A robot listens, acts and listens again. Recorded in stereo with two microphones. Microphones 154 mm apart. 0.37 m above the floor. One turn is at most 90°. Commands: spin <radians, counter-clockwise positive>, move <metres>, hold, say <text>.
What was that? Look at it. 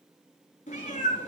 spin 0.96
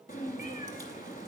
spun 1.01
spin 1.13
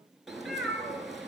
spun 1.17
say Found it: a cat meowing, straight ahead.